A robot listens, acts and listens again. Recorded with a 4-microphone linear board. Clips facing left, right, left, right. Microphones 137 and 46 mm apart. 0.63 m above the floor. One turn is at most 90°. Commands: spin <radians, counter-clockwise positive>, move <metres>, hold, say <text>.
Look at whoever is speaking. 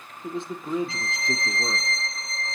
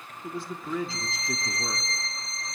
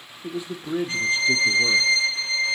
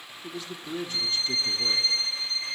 spin 0.35
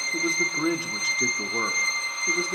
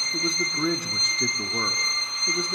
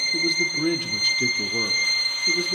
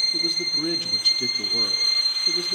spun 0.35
say Facing the man speaking, 1 to 2 m away.